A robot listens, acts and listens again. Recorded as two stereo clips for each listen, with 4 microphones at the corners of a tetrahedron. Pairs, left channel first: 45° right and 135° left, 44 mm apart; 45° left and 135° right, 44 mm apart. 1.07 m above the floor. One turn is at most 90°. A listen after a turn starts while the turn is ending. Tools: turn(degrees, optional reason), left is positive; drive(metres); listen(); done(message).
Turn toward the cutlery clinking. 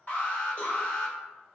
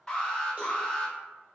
listen()
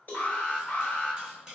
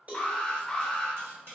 turn(degrees=-90, reason="The cutlery clinking: 150° right.")
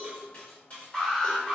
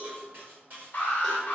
turn(degrees=-90, reason="The cutlery clinking is now 105° right.")
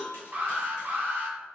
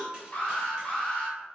turn(degrees=-15, reason="Nothing new. It was at 15° right.")
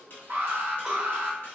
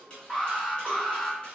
turn(degrees=-15, reason="The cutlery clinking is now 15° right.")
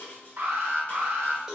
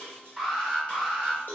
done("Facing the cutlery clinking, 1 to 2 m away.")